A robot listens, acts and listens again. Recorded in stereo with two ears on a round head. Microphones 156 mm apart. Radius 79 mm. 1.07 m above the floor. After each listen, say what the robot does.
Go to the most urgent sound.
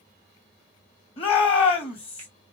Turn 35° left.
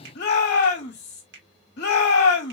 Turn 105° left.
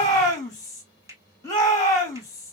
Turn 20° left.
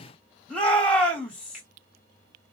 Drive 1.0 m forward.
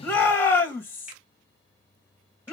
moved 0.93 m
Turn 15° left.
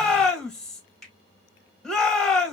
Drive 1.0 m forward.
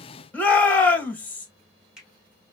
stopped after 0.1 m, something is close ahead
Turn 10° left.
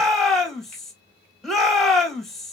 Arrived at the shout, straight ahead.